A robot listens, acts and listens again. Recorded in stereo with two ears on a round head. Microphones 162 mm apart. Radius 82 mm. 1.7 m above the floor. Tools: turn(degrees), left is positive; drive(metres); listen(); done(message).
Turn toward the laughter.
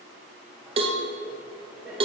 turn(degrees=-30)
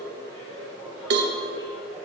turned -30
turn(degrees=25)
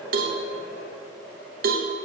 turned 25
turn(degrees=15)
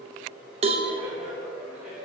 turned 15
done("Found it: laughter, straight ahead, over 4 m away.")